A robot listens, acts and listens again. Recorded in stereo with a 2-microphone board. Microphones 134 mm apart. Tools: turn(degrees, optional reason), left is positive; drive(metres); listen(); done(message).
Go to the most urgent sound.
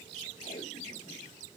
listen()
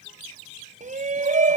turn(degrees=-65, reason="The shout: about 65° right or 115° right.")
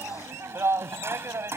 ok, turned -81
turn(degrees=-20, reason="So it is at 20° right.")
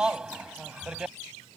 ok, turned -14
drive(metres=1.0)
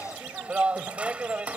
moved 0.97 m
turn(degrees=-10, reason="The shout is now 10° right.")
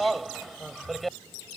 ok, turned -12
drive(metres=1.0)
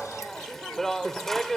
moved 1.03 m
drive(metres=1.0)
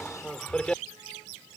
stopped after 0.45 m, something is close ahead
turn(degrees=10, reason="The shout is now 10° left.")
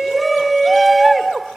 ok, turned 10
done("Arrived at the shout, straight ahead.")